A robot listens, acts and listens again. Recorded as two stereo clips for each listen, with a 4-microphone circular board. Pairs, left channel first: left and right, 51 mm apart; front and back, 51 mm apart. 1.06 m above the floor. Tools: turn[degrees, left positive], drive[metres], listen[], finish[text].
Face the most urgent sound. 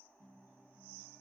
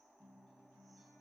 Action: listen[]
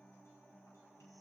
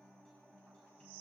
Action: listen[]
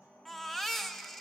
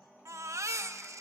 Thought: The baby crying: 175° left.
Action: turn[175]
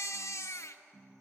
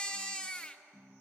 Thought: The baby crying is now 70° left.
Action: turn[70]
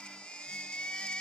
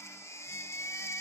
Thought: The baby crying is now 15° left.
Action: turn[15]
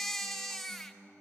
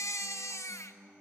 Action: finish[Found it: a baby crying, straight ahead.]